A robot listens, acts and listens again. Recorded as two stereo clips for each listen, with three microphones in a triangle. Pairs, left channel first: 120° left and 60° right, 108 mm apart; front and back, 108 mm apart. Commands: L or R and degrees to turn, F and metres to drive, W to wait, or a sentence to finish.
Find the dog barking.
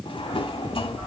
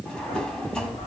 L10
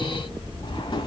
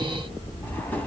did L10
Found it: a dog barking, straight ahead, over 4 m away.